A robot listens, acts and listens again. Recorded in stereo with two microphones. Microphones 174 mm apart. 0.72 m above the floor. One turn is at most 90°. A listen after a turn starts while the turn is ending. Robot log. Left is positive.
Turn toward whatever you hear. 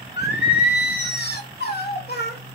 note: The singing: about 65° left or 115° left.
cmd yaw +65
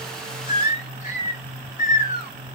note: So it is at 55° left.
cmd yaw +55
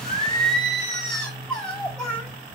note: The singing is now 10° left.
cmd yaw +10
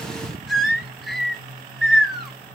end: Facing the singing, 2 to 4 m away.